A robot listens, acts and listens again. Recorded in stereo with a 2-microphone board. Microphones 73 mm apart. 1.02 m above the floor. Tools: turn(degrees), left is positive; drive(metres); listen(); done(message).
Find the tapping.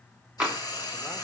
turn(degrees=-30)
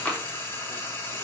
turn(degrees=20)
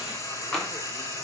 done("Facing the tapping, 2 to 4 m away.")